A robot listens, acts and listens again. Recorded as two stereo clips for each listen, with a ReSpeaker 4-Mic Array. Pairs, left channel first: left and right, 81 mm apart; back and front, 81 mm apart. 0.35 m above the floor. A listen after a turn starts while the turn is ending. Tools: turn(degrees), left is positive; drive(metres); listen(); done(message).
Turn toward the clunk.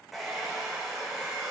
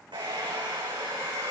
listen()
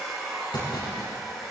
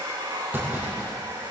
turn(degrees=65)
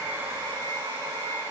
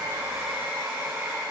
done("Facing where the clunk came from. I can't hear it now.")